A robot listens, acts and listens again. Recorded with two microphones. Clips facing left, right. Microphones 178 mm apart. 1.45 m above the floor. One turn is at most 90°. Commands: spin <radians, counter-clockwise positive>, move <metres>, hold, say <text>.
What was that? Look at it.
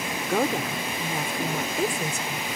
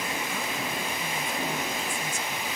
spin 1.22
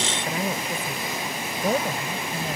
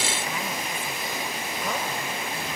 spin 0.70
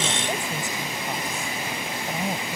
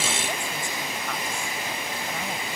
spin 0.35
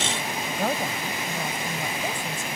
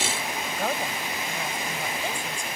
say Facing the woman speaking.